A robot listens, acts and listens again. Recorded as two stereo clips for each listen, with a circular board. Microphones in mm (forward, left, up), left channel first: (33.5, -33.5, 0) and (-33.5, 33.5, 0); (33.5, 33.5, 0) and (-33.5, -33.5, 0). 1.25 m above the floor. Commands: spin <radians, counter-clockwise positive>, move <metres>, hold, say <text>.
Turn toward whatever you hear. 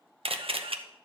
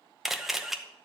spin 2.44
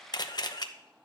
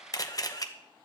say Found it: a camera shutter, straight ahead.